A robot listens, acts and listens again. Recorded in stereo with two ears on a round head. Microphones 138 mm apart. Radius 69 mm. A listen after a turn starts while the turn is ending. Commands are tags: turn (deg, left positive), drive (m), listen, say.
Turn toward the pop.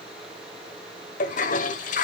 <listen/>
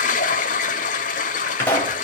<turn deg="30"/>
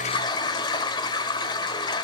<listen/>
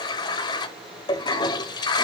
<say>I heard a pop, but can't make it out now. It was about 15° right or 135° left.</say>